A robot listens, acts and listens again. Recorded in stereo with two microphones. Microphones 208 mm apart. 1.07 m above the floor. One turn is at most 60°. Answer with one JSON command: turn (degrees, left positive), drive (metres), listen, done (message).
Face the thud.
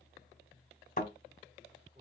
{"turn": 40}
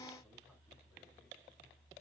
{"listen": true}
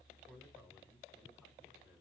{"done": "I heard a thud, but can't make it out now. It was about straight ahead or 100° left."}